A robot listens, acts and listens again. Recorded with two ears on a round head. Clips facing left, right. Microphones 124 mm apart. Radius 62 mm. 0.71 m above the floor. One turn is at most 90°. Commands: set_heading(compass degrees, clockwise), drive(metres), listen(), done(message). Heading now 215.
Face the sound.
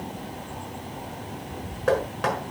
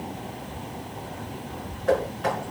set_heading(125)
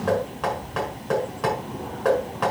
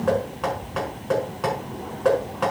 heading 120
done("Facing the knocking.")